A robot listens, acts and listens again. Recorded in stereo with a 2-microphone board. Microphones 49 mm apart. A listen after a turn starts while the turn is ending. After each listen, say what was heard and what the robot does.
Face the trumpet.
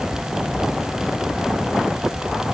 Keep listening.
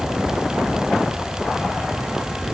Keep listening.
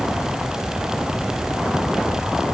I can't make out a trumpet to turn to.